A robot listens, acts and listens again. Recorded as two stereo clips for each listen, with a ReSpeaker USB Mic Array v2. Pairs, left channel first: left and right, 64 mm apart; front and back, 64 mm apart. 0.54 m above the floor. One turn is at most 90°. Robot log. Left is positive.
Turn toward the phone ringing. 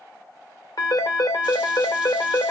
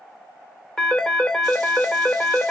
note: The phone ringing: 80° left.
cmd yaw +80
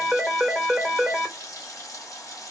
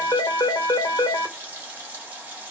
end: Found it: a phone ringing, straight ahead.